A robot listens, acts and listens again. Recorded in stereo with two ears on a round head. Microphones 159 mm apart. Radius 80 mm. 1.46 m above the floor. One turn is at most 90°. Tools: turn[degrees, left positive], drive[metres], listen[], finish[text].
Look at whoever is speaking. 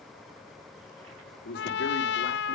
Thought: The man speaking: about 65° left or 115° left.
Action: turn[65]
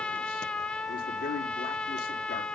Thought: So it is at 50° left.
Action: turn[50]
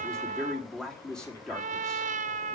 Action: finish[Found it: a man speaking, straight ahead.]